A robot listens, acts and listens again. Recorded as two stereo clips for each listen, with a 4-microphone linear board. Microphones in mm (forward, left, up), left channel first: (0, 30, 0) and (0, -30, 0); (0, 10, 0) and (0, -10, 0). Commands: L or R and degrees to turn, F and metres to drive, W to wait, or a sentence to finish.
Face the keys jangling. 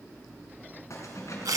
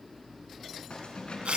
L55
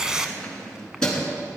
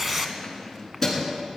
L15
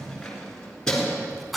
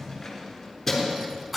L10
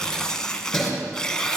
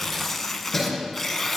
Facing the keys jangling, over 4 m away.